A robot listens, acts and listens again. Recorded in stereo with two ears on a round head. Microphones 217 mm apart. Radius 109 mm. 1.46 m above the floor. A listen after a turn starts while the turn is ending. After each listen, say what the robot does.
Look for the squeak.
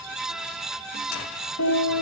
Keep listening.
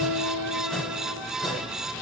Keep listening.
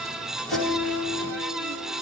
I can't make out a squeak to turn to.